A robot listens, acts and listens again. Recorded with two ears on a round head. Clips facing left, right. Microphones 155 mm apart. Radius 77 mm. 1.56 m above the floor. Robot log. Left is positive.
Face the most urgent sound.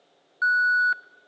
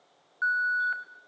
note: The alarm: about 55° left or 125° left.
cmd yaw +55
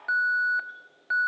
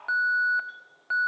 note: So it is at 10° left.
cmd yaw +10
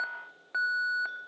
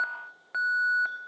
end: Facing the alarm.